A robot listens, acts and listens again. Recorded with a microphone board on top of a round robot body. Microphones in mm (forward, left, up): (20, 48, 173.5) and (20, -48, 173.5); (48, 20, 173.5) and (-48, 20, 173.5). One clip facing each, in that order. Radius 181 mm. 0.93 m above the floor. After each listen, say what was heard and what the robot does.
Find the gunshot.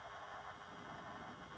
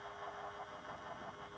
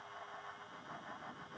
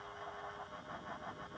Keep listening.
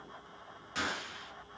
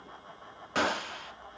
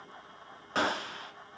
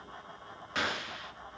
The gunshot: 55° right. Turn 55° right.
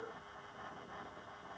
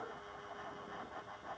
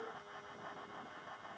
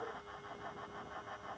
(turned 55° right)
Facing where the gunshot came from. I can't hear it now.